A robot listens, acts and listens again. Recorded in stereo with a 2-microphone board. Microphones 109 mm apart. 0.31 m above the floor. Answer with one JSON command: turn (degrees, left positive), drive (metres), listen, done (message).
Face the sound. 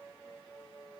{"listen": true}
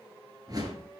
{"turn": -35}
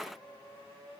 {"listen": true}
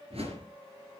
{"turn": -110}
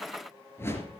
{"turn": 25}
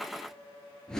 {"done": "Found it: a whoosh, straight ahead, 2 to 4 m away."}